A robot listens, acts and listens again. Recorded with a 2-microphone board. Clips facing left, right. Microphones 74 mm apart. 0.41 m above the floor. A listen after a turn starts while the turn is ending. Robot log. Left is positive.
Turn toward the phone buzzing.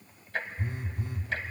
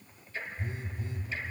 note: The phone buzzing: about 65° left or 115° left.
cmd yaw +65
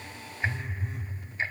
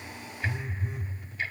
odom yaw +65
end: Facing the phone buzzing.